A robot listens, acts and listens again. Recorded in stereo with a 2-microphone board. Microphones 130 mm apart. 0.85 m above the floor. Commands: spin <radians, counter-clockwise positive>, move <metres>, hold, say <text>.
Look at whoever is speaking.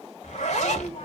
spin 0.96
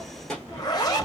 say Found it: a child speaking, straight ahead.